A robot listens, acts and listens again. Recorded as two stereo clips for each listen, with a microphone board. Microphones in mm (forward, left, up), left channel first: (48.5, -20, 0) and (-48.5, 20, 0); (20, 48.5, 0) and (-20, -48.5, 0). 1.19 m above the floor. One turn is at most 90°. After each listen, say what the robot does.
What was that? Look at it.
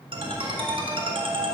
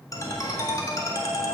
Turn 90° left.
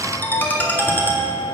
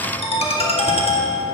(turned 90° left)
Turn 50° left.
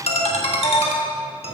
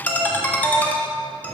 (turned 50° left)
Turn 10° right.
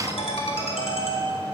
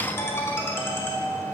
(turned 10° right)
Facing the ringtone.